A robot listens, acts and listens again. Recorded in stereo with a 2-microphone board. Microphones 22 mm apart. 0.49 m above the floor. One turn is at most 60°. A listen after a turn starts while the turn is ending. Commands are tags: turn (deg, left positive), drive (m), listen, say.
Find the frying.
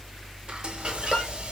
<turn deg="-50"/>
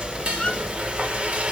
<turn deg="-60"/>
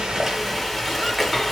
<say>Facing the frying, 1 to 2 m away.</say>